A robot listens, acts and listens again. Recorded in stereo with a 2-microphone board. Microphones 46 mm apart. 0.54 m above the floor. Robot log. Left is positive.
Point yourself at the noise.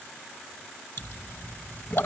note: The pop: about 65° left or 115° left.
cmd yaw +65
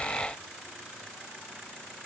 cmd idle
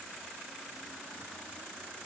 end: I heard a pop, but can't make it out now. It was about straight ahead or 50° left.